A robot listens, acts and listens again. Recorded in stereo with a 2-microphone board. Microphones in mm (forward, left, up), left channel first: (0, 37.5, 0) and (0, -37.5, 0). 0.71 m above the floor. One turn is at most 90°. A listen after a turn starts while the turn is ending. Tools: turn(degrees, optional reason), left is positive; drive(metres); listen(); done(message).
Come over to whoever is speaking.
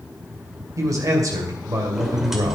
turn(degrees=-50, reason="The man speaking: about 50° right or 130° right.")
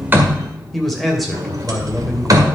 drive(metres=1.0)
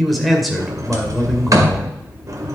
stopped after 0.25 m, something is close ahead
done("Something is in my way. I am facing the man speaking but have not reached it.")